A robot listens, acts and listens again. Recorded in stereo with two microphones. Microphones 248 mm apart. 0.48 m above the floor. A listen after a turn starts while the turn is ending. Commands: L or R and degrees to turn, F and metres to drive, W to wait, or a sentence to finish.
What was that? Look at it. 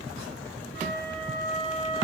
L40
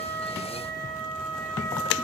Facing the flute, over 4 m away.